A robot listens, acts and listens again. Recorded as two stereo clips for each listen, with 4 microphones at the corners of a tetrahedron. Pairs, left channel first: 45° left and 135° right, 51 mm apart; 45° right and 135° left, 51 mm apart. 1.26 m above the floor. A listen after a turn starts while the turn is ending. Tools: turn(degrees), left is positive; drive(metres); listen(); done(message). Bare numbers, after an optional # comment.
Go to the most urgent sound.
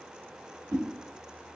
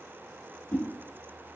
listen()
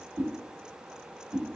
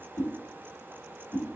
listen()
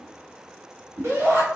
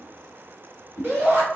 # The shout: 170° right.
turn(-170)
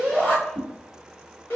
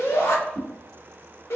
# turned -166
drive(1.0)
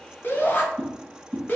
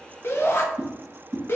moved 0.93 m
drive(1.0)
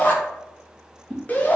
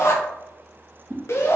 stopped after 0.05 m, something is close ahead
# The shout is now 10° right.
turn(-10)
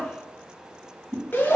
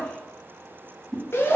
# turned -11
done("I am next to the shout.")